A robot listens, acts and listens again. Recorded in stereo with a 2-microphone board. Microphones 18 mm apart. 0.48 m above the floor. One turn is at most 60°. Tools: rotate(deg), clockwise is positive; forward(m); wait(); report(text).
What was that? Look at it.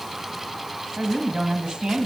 rotate(60)
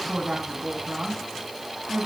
rotate(45)
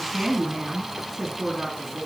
rotate(15)
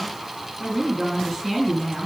report("Found it: a woman speaking, straight ahead.")